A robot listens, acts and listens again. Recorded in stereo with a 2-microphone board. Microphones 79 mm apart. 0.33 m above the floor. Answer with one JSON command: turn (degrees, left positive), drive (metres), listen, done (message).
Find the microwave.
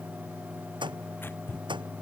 {"turn": -90}
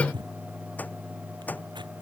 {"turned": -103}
{"turn": 20}
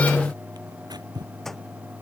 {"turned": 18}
{"done": "Found it: a microwave, straight ahead."}